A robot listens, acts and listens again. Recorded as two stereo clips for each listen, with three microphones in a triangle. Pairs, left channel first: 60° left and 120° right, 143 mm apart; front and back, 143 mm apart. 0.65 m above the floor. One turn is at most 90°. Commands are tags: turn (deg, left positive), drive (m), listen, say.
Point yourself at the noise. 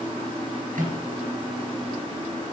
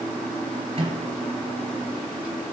<turn deg="-90"/>
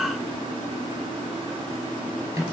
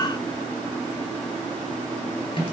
<turn deg="-50"/>
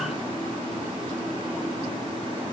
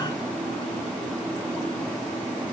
<listen/>
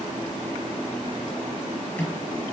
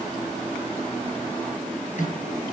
<turn deg="-10"/>
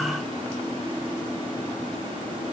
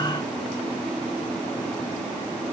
<listen/>
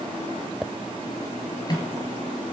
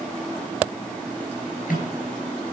<say>Found it: a microwave, straight ahead.</say>